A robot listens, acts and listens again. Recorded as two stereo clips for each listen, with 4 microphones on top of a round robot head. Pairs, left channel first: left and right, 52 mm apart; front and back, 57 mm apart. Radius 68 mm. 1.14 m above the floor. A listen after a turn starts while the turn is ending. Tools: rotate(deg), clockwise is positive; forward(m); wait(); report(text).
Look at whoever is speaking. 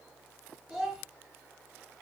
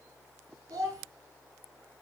rotate(170)
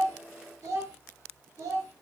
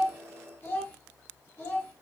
rotate(55)
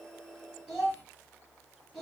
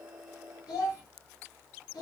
report("Found it: a child speaking, straight ahead, 1 to 2 m away.")